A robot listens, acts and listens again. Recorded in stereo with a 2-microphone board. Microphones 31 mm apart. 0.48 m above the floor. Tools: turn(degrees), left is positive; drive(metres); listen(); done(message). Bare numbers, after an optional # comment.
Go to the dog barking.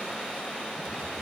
listen()
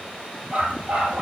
# The dog barking: about 40° right or 140° right.
turn(-40)
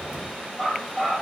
drive(1.0)
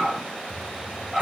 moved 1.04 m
drive(1.0)
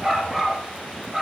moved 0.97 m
# The dog barking is now 10° right.
turn(-10)
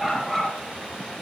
drive(1.0)
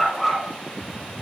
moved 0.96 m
drive(1.0)
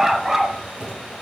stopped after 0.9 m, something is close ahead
# The dog barking is now 10° right.
turn(-10)
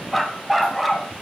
done("Arrived at the dog barking, straight ahead.")